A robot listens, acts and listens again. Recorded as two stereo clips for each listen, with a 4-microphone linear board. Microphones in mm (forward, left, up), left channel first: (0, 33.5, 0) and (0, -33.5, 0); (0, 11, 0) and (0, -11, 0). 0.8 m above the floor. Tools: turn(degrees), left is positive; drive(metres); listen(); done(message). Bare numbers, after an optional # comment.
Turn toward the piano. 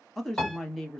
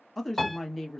# The piano: about 20° left or 160° left.
turn(20)
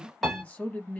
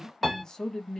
done("Found it: a piano, straight ahead.")